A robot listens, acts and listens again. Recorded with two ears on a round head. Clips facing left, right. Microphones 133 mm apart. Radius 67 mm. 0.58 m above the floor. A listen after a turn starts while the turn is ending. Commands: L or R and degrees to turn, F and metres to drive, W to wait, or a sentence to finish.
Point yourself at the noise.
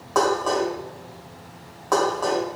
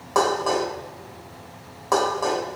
R30
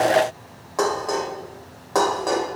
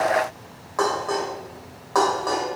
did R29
L25
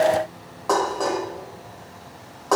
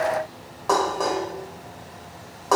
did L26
Found it: dishes clattering, straight ahead.